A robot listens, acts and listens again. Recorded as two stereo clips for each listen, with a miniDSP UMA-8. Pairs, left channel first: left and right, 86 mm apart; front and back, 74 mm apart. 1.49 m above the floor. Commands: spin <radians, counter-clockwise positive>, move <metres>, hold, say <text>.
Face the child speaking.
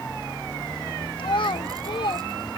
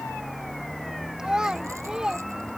spin 1.75
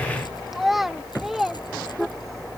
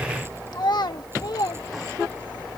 say Facing the child speaking.